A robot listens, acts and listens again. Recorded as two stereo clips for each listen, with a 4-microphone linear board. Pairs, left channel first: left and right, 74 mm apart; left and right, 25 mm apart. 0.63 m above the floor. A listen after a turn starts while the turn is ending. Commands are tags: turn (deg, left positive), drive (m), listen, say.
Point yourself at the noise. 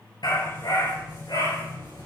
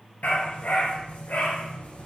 <turn deg="90"/>
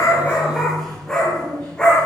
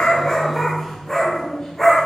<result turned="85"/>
<turn deg="15"/>
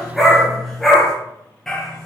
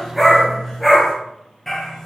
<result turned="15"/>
<turn deg="10"/>
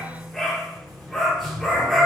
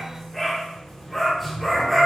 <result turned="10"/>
<say>Found it: a dog barking, straight ahead, over 4 m away.</say>